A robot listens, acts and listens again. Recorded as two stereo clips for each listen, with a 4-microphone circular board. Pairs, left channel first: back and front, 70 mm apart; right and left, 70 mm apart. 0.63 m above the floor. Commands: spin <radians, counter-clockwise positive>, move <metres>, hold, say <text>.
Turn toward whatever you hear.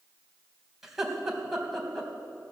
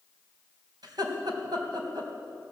spin 1.66
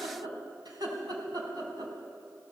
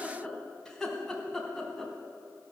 say Found it: laughter, straight ahead.